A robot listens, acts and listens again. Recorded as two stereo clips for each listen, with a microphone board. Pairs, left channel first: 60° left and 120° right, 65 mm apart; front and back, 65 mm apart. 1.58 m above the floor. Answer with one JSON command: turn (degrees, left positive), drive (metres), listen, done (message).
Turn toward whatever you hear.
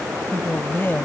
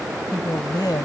{"done": "Found it: a woman speaking, straight ahead."}